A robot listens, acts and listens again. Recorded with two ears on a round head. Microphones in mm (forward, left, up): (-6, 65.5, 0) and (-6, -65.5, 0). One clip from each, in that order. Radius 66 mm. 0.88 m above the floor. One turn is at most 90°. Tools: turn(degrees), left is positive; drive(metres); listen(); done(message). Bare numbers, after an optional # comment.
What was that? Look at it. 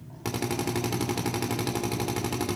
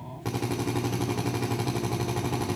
# The drill: about 60° left or 120° left.
turn(60)
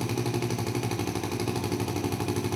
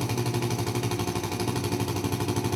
done("Facing the drill, 2 to 4 m away.")